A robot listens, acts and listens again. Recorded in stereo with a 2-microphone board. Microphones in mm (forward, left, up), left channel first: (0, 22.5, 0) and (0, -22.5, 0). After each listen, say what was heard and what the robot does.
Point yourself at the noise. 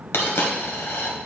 The dropped coin: about 65° left or 115° left. Turn 65° left.
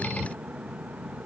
Keep listening.
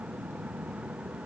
I heard a dropped coin, but can't make it out now. It was about straight ahead or 50° left.